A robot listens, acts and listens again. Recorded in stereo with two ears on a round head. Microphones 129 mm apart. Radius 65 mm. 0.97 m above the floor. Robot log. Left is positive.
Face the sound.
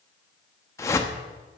note: The whoosh: about 20° left or 160° left.
cmd yaw +20
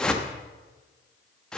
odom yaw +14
end: Found it: a whoosh, straight ahead, 1 to 2 m away.